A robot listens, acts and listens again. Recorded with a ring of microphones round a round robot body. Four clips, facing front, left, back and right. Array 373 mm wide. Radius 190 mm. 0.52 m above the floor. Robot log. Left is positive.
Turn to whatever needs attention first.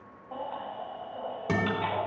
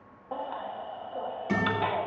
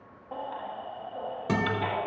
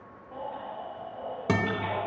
note: The baby crying: 100° left.
cmd yaw +100
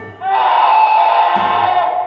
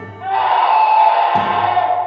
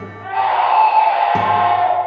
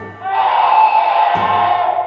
end: Found it: a baby crying, straight ahead, 2 to 4 m away.